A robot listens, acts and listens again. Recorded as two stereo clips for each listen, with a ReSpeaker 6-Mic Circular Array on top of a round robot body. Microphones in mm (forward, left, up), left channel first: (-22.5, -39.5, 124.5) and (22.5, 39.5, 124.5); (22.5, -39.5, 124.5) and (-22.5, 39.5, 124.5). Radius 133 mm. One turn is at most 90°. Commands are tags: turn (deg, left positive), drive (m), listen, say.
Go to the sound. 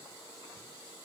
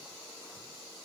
<listen/>
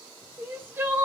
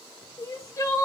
<drive m="1.0"/>
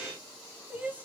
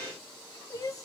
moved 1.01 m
<turn deg="-10"/>
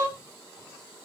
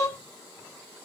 <drive m="1.0"/>
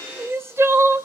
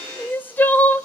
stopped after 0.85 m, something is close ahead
<say>I am next to the crying.</say>